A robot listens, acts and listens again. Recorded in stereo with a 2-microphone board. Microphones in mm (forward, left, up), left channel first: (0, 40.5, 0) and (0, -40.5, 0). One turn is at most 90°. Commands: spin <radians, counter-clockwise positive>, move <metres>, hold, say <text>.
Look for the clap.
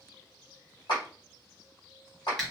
spin 1.13
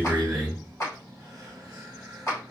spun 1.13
spin 0.70
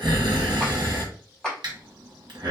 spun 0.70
say Facing the clap, 1 to 2 m away.